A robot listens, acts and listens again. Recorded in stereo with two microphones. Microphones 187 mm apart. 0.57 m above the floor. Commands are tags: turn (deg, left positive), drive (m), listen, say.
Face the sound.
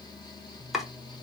<turn deg="30"/>
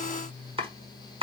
<turn deg="-30"/>
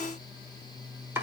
<turn deg="-15"/>
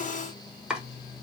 <say>Found it: chopping, straight ahead, 1 to 2 m away.</say>